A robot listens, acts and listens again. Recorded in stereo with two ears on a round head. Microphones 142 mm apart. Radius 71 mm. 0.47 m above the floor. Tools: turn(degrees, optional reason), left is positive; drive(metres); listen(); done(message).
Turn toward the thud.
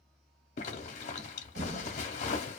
turn(degrees=-55, reason="The thud: about 55° right or 125° right.")
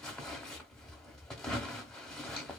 listen()
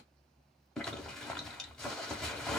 done("I heard a thud, but can't make it out now. It was about straight ahead or 70° right.")